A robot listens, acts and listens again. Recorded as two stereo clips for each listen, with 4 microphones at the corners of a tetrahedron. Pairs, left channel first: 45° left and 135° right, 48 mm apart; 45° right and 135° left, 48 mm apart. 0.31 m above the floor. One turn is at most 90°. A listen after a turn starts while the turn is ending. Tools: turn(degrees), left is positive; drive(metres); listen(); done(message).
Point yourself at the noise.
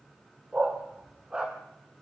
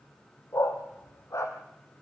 turn(degrees=-65)
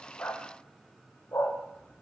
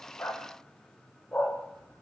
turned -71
turn(degrees=20)
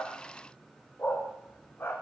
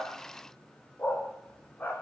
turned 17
done("Facing the dog barking, over 4 m away.")